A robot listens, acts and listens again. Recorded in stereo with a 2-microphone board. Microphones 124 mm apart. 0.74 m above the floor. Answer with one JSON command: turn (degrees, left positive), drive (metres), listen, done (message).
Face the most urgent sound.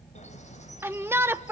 {"turn": -20}
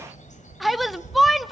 {"done": "Found it: a shout, straight ahead."}